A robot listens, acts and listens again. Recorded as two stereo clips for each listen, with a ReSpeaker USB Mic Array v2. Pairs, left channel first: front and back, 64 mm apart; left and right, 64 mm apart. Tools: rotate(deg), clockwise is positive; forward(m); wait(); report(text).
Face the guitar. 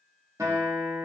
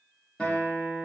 rotate(-165)
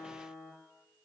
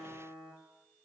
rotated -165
rotate(20)
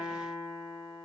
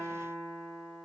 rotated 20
report("Found it: a guitar, straight ahead, under 1 m away.")